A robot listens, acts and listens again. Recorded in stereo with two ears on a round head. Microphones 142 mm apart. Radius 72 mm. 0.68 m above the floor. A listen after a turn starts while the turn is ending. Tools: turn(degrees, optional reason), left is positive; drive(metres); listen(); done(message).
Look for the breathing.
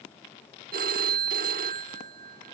listen()
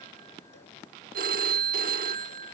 listen()
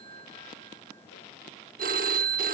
done("I can't make out breathing, only a phone ringing.")